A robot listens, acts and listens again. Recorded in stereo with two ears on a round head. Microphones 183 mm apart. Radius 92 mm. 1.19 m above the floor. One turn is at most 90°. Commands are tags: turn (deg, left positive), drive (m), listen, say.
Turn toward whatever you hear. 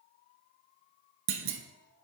<turn deg="-65"/>
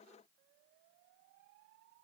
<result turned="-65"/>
<listen/>
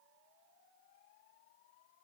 <say>I heard a clunk, but can't make it out now. It was about straight ahead or 50° right.</say>